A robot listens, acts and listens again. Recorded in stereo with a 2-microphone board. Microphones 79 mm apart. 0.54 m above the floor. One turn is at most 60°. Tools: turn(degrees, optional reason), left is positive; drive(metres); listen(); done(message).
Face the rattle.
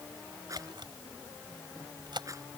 turn(degrees=-45, reason="The rattle: about 45° right or 135° right.")
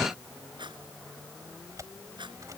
turn(degrees=-60, reason="So it is at 90° right.")
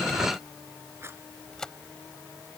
turn(degrees=-35, reason="The rattle is now 35° right.")
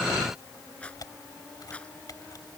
turn(degrees=15, reason="The rattle is now 15° left.")
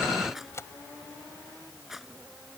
done("Facing the rattle.")